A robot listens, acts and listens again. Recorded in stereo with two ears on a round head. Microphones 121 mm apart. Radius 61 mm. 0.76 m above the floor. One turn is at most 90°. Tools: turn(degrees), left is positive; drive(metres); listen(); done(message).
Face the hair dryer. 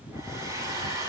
turn(degrees=-25)
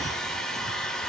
done("Facing the hair dryer, over 4 m away.")